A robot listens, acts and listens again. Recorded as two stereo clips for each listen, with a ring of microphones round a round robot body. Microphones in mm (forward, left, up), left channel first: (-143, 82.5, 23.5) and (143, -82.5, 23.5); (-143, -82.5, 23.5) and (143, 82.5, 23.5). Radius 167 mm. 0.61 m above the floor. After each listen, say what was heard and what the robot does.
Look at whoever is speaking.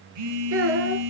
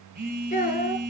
The child speaking: 80° right. Turn 80° right.
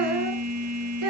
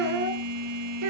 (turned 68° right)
Facing the child speaking, over 4 m away.